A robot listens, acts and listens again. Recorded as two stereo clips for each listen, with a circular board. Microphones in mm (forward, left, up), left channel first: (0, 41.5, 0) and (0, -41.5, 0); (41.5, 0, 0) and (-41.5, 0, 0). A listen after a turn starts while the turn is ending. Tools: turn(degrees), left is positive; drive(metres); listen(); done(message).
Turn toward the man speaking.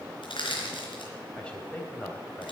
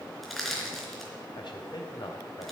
turn(degrees=20)
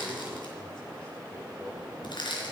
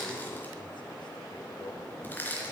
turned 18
listen()
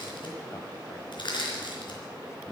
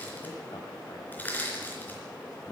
listen()
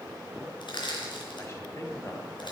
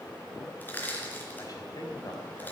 turn(degrees=40)
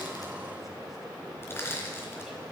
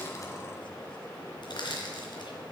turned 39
listen()
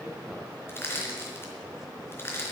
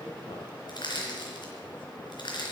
listen()
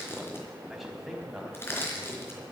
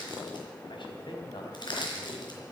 done("Facing the man speaking, 2 to 4 m away.")